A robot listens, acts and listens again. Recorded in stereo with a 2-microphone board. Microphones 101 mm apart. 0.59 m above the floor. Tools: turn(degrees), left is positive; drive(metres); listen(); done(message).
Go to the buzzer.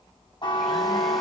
turn(degrees=45)
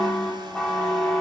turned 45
drive(metres=1.0)
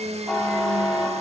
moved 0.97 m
drive(metres=1.0)
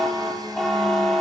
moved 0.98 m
drive(metres=1.0)
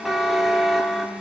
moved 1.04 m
drive(metres=1.0)
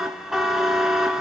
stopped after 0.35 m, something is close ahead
done("Arrived at the buzzer, straight ahead.")